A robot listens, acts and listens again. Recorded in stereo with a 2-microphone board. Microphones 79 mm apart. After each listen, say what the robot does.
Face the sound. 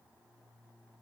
Keep listening.
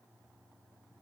Keep listening.
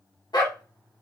Turn 65° left.
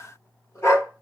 Turn 45° left.
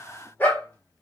Turn 30° left.
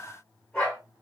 Turn 15° left.
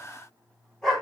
Facing the dog barking, 2 to 4 m away.